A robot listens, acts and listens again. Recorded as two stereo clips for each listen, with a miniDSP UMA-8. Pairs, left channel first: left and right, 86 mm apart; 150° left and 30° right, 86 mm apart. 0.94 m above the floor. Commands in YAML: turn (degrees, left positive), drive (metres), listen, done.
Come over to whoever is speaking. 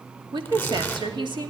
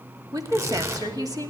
turn: -70
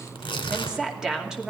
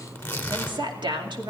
drive: 1.0
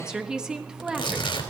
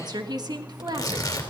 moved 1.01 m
turn: -10
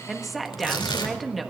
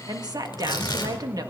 drive: 1.0
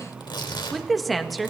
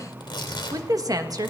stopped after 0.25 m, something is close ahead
done: "Arrived at the woman speaking, straight ahead."